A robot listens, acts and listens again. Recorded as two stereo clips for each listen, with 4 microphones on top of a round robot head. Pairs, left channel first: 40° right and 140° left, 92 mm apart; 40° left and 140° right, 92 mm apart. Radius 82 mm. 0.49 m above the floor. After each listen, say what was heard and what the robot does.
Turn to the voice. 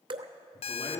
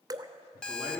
The man speaking: 70° right. Turn 70° right.
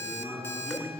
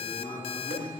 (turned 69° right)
Facing the man speaking, over 4 m away.